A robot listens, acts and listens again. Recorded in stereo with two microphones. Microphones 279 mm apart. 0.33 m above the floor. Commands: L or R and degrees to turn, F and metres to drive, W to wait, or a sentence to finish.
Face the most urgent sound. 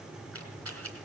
W
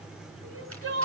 R50
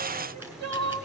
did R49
R75
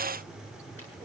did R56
R20
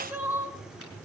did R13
Facing the crying, 1 to 2 m away.